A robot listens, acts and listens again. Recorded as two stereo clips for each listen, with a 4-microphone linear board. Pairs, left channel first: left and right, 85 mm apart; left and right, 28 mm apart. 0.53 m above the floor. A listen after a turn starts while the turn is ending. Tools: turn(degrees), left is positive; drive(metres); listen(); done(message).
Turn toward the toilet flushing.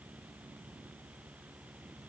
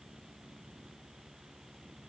listen()
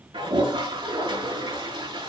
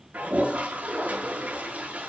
turn(degrees=-90)
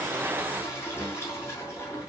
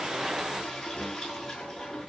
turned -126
turn(degrees=30)
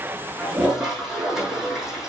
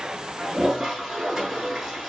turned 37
done("Found it: a toilet flushing, straight ahead, over 4 m away.")